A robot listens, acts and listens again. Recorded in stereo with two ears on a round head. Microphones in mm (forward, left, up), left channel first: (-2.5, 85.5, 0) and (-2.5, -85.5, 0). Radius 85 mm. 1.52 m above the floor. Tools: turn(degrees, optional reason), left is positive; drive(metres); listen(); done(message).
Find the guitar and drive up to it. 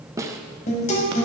turn(degrees=40, reason="The guitar: about 40° left or 140° left.")
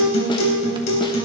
turn(degrees=100, reason="So it is at 100° left.")
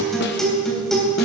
drive(metres=1.0)
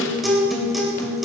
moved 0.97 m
drive(metres=1.0)
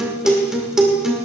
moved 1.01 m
drive(metres=1.0)
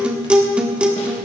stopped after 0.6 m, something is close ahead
done("I am next to the guitar.")